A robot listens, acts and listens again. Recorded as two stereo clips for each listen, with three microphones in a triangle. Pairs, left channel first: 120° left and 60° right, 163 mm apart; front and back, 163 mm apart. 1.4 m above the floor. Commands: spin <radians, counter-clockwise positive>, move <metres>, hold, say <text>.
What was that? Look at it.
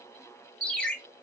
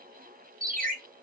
spin -2.71
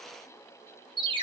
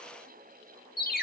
say Facing the ringtone.